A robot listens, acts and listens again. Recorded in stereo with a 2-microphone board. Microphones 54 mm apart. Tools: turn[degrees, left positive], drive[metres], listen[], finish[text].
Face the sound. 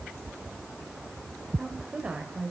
Thought: The woman speaking: about 25° right or 155° right.
Action: turn[-25]
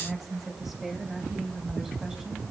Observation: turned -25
Action: turn[-30]
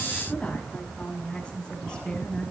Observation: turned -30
Thought: So it is at 15° left.
Action: turn[15]
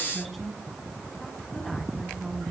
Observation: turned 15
Action: finish[Facing the woman speaking.]